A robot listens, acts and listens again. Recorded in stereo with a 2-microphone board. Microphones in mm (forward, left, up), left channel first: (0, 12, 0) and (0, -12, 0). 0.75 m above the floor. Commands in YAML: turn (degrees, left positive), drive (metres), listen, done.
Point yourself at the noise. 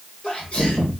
turn: 45
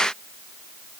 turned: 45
listen: true
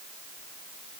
done: "I heard a sneeze, but can't make it out now. It was about straight ahead or 90° left."